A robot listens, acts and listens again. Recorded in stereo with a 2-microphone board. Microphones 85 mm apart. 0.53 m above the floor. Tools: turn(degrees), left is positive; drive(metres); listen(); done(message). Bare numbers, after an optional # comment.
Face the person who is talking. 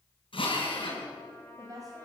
# The woman speaking: about 40° right or 140° right.
turn(-40)
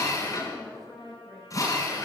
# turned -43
done("Found it: a woman speaking, straight ahead, 2 to 4 m away.")